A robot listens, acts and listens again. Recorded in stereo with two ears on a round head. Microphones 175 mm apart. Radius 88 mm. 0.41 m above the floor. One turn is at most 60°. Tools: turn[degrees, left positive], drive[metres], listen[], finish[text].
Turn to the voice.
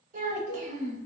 Thought: The child speaking: about 40° right or 140° right.
Action: turn[-40]
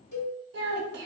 Thought: So it is at 90° right.
Action: turn[-60]
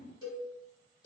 Thought: Nothing new. It was at 30° right.
Action: turn[-30]
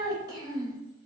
Thought: The child speaking is now 25° right.
Action: turn[-25]
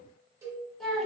Action: finish[Found it: a child speaking, straight ahead, under 1 m away.]